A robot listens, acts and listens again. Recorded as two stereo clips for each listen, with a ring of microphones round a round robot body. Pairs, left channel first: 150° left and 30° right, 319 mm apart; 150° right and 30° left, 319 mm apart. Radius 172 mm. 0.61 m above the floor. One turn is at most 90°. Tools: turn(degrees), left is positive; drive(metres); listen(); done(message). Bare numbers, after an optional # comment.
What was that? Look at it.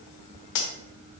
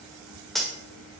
# The cutlery clinking: 120° left.
turn(90)
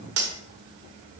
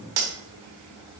# The cutlery clinking is now 20° left.
turn(20)
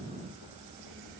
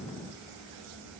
listen()
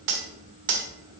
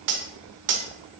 done("Facing the cutlery clinking, 1 to 2 m away.")